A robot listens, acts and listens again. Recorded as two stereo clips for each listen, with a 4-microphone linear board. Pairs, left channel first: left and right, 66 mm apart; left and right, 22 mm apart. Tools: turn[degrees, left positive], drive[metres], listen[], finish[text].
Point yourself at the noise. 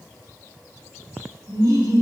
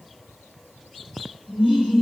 Action: turn[-90]
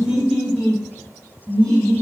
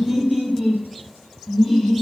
Action: finish[Facing the laughter, 2 to 4 m away.]